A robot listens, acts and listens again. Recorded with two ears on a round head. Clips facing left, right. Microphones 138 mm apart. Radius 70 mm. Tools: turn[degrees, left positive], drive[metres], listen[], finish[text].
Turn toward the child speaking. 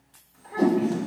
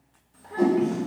Thought: The child speaking: about 40° right or 140° right.
Action: turn[-40]
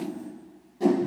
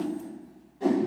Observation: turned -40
Action: listen[]
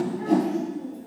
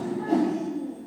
Thought: So it is at 10° right.
Action: turn[-10]
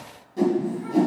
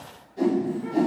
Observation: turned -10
Action: listen[]
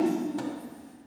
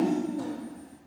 Action: finish[Facing the child speaking.]